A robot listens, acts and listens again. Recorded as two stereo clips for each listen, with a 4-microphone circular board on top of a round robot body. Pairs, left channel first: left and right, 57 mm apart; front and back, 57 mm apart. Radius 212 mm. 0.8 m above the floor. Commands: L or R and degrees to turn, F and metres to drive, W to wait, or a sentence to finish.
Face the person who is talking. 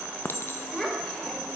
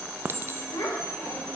L10
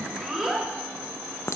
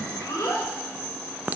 Found it: a child speaking, straight ahead, 2 to 4 m away.